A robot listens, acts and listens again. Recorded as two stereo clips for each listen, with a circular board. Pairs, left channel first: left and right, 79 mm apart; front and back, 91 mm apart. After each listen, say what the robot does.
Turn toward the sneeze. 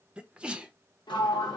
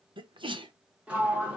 Turn 165° right.
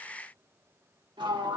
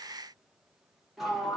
Facing where the sneeze came from. I can't hear it now.